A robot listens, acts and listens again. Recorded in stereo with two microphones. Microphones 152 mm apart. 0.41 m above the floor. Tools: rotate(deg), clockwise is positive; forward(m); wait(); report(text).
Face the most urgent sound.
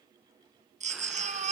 rotate(50)
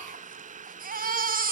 rotate(75)
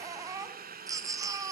rotate(25)
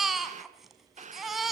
report("Facing the baby crying, 2 to 4 m away.")